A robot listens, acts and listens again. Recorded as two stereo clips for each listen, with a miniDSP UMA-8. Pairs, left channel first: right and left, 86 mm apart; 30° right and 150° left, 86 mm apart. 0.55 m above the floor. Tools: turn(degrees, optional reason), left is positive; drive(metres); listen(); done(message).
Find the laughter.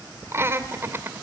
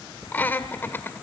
turn(degrees=30, reason="The laughter: 30° left.")
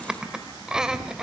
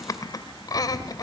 done("Facing the laughter.")